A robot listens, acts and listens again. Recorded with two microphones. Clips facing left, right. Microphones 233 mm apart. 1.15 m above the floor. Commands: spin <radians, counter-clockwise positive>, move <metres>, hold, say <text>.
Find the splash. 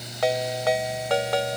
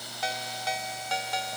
hold
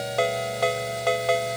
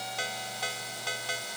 hold
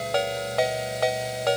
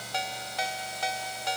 say I can't make out a splash to turn to.